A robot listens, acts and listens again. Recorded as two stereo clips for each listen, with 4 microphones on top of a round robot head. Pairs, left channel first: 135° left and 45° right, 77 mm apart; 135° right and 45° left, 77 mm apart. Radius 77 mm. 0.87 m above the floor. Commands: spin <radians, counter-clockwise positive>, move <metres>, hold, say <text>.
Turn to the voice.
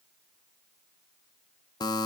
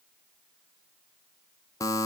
hold
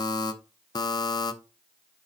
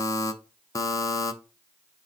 hold
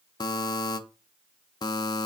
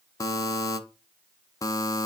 say I can't make out anyone speaking to turn to.